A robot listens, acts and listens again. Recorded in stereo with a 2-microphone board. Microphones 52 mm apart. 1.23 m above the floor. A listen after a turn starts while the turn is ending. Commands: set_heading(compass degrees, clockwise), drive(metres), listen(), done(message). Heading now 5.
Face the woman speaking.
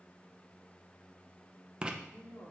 set_heading(310)
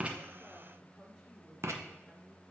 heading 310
done("Found it: a woman speaking, straight ahead, 2 to 4 m away.")